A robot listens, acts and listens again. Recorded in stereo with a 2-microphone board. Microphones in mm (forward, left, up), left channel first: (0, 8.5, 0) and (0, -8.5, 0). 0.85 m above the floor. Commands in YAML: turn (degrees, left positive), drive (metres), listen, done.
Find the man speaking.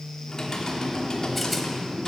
listen: true
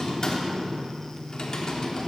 listen: true
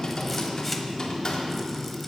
done: "I can't make out a man speaking, only typing on a keyboard."